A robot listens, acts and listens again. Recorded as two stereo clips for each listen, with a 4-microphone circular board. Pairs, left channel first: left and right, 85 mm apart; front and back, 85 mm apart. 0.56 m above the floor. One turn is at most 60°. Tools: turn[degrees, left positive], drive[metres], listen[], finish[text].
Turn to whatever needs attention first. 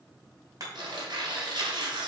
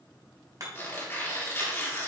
Action: listen[]
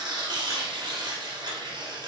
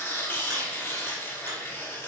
Action: listen[]
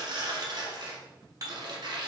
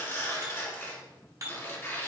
Action: finish[I can't make out anything urgent to turn to.]